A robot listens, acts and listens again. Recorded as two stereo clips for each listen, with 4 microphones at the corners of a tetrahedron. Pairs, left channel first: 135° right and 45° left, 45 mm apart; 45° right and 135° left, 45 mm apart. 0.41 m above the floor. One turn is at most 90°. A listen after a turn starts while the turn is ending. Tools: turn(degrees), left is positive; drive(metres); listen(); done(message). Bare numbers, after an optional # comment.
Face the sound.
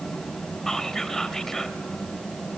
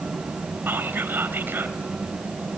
# The whispering: 145° left.
turn(90)
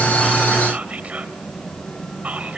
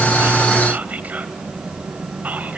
# The whispering is now 95° left.
turn(90)
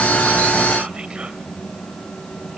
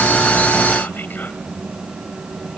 listen()
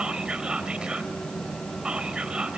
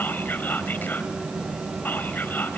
# The whispering is now 15° right.
turn(-15)
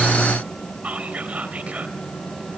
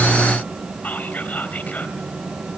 done("Facing the whispering, 2 to 4 m away.")